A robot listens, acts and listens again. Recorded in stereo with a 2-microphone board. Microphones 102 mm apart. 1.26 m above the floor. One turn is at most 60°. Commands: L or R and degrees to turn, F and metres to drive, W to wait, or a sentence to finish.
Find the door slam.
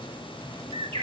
W
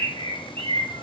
W
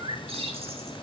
I can't make out a door slam, only a bird.